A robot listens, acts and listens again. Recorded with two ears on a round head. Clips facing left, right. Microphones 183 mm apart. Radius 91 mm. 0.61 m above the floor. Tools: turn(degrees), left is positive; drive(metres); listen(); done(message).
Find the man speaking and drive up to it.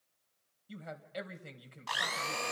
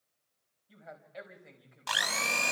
turn(degrees=50)
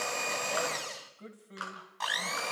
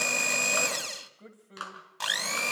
drive(metres=1.0)
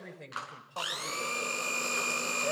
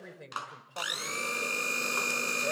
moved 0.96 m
turn(degrees=-10)
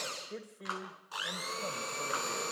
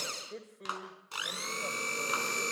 drive(metres=1.0)
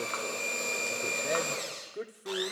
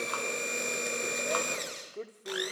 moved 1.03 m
turn(degrees=15)
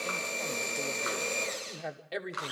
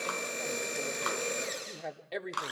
drive(metres=1.0)
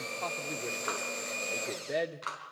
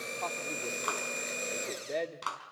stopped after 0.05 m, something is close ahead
turn(degrees=10)
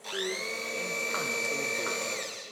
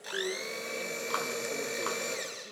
listen()
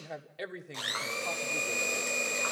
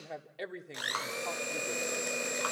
done("I am next to the man speaking.")